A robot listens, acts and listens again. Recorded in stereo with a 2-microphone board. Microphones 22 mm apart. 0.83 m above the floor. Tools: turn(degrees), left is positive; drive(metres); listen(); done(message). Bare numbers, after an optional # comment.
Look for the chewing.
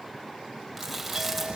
turn(30)
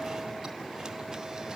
listen()
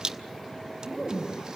# So it is at 30° right.
turn(-30)
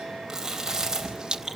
# The chewing is now 25° right.
turn(-25)
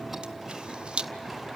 listen()
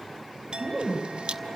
done("Found it: chewing, straight ahead, over 4 m away.")